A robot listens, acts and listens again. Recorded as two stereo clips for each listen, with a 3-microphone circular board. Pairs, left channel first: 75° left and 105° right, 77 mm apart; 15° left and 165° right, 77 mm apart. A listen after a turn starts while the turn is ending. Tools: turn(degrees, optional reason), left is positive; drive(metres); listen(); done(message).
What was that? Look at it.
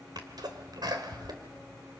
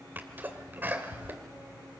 turn(degrees=-105, reason="The sneeze: 105° right.")
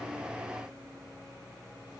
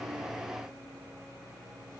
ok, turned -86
turn(degrees=-20, reason="Nothing new. It was at 20° right.")
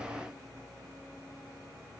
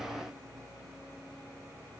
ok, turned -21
done("Facing where the sneeze came from. I can't hear it now.")